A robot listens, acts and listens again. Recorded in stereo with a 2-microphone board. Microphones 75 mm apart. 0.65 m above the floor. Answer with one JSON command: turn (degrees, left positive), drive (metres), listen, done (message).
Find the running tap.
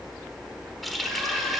{"turn": 30}
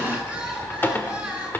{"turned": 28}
{"turn": 155}
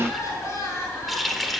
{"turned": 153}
{"done": "Found it: a running tap, straight ahead, 1 to 2 m away."}